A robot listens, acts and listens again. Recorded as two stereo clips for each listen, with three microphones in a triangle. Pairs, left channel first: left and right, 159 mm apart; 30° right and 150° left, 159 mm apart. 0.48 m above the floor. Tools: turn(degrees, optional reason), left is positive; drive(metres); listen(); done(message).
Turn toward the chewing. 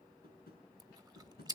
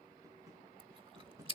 turn(degrees=-155, reason="The chewing: 155° right.")
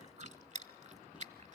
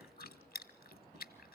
turn(degrees=-50, reason="The chewing is now 50° right.")
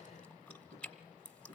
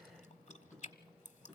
done("Facing the chewing, 1 to 2 m away.")